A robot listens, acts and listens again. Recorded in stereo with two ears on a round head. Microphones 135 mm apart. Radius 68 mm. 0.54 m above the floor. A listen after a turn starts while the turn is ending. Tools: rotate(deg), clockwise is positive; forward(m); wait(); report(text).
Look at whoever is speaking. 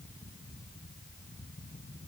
wait()
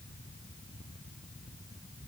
wait()
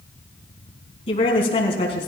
rotate(-40)
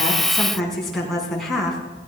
report("Found it: a woman speaking, straight ahead.")